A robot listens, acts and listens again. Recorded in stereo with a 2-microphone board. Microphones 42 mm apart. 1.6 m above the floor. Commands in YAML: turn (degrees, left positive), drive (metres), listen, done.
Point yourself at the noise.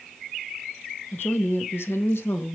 turn: 70
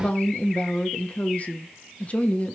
turn: 35
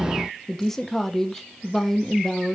turn: 10
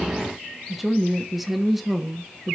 done: "Found it: a woman speaking, straight ahead, 1 to 2 m away."